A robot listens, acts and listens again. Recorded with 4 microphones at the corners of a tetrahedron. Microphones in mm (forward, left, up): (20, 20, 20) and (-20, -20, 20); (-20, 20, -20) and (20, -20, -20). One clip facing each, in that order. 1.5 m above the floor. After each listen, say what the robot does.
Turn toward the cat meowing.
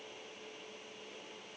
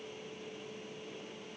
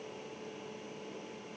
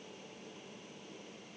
Keep listening.
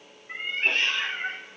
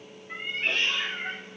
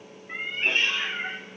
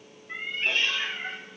Turn 80° left.
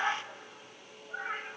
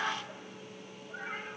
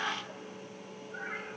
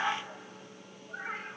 Turn 10° right.
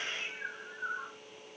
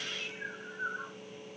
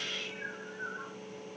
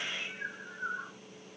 Found it: a cat meowing, straight ahead.